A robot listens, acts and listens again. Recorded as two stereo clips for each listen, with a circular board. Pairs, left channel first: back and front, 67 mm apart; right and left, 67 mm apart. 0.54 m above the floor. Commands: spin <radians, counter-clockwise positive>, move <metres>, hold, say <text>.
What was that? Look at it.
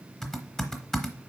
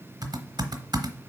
spin 1.66
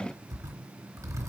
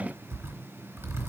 spin 0.70
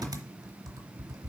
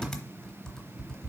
spin -0.17
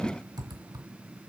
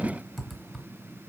say Facing the typing on a keyboard.